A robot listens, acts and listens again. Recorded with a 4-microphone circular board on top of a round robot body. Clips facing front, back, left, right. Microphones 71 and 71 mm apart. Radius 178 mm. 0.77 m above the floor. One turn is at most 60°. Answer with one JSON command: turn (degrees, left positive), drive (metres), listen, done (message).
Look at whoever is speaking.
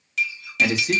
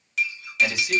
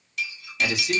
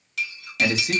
{"turn": -45}
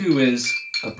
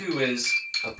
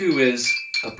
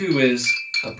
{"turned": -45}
{"turn": 10}
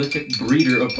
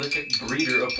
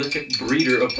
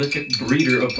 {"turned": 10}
{"done": "Facing the man speaking."}